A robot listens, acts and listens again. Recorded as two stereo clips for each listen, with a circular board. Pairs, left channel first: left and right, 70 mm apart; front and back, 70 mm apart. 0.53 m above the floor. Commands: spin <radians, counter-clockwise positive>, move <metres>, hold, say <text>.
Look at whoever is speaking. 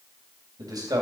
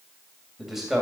spin -1.66
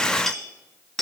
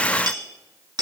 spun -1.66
hold
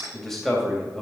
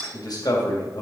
say Facing the man speaking.